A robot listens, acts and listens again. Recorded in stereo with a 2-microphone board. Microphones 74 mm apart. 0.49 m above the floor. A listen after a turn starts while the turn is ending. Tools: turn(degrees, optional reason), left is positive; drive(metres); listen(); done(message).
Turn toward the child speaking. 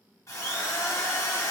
listen()
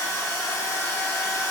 listen()
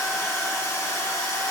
done("I can't make out a child speaking, only a drill.")